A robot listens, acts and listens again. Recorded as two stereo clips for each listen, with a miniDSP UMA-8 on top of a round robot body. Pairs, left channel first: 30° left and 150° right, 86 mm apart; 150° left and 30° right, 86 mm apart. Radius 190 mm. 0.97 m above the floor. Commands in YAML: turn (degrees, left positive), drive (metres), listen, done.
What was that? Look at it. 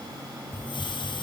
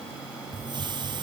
done: "Found it: a hiss, straight ahead, 1 to 2 m away."